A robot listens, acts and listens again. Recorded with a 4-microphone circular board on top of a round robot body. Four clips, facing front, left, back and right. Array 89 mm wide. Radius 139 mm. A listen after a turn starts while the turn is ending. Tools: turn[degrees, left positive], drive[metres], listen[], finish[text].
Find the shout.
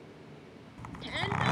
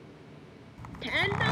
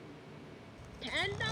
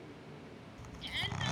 Thought: The shout: 90° left.
Action: turn[90]
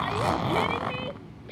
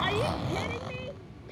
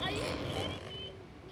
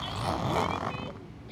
Action: listen[]
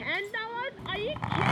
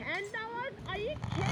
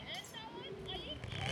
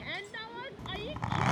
Thought: The shout is now 25° left.
Action: turn[25]
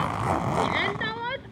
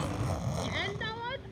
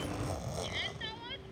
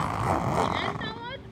Thought: The shout is now 10° left.
Action: turn[10]
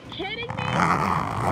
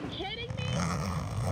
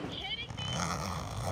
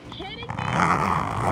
Action: finish[Found it: a shout, straight ahead.]